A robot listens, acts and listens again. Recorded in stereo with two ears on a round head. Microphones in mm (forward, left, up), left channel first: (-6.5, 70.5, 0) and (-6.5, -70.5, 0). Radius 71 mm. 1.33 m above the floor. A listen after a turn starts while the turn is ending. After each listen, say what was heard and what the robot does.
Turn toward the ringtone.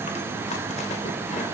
Keep listening.
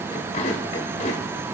Keep listening.
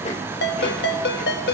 The ringtone: about 70° left or 110° left. Turn 70° left.
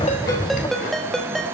Found it: a ringtone, straight ahead, 1 to 2 m away.